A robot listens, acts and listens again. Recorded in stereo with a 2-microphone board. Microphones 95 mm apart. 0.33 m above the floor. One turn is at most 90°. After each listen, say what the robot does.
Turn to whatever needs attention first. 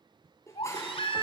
Turn 90° left.
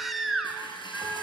Facing the baby crying.